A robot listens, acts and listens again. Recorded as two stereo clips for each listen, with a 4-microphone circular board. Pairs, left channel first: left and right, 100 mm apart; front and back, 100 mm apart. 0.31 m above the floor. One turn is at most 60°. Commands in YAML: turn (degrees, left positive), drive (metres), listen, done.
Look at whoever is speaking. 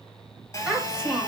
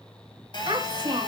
turn: -60
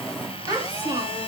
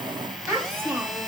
turn: -60
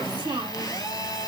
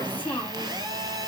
turn: -60
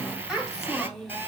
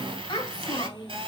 done: "Found it: a child speaking, straight ahead."